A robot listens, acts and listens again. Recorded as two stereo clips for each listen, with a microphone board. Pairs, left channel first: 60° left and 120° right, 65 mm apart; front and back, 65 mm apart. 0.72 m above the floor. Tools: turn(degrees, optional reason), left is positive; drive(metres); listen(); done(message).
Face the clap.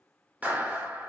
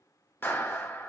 turn(degrees=-55, reason="The clap: 55° right.")
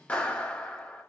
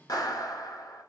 turn(degrees=-10, reason="The clap is now 10° right.")
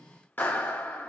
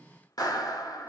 done("Facing the clap, 1 to 2 m away.")